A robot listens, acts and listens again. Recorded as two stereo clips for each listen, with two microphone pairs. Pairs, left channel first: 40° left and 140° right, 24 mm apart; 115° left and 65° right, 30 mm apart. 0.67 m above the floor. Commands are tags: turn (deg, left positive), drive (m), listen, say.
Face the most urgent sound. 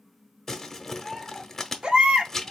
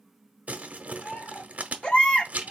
<turn deg="170"/>
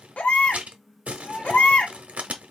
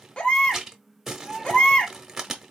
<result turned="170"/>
<turn deg="60"/>
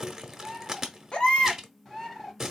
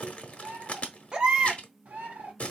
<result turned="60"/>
<say>Facing the baby crying, under 1 m away.</say>